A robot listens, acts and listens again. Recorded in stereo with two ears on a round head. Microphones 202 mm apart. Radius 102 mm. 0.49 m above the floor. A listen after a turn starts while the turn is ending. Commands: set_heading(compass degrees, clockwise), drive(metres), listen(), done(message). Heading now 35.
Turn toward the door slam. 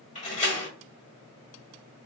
set_heading(0)
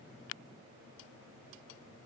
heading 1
listen()
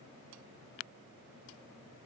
done("I heard a door slam, but can't make it out now. It was about straight ahead or 110° left.")